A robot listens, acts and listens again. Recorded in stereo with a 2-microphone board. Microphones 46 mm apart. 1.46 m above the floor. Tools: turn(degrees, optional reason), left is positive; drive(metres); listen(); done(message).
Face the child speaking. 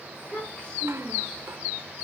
turn(degrees=40, reason="The child speaking: about 40° left or 140° left.")
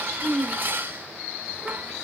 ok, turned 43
done("Found it: a child speaking, straight ahead.")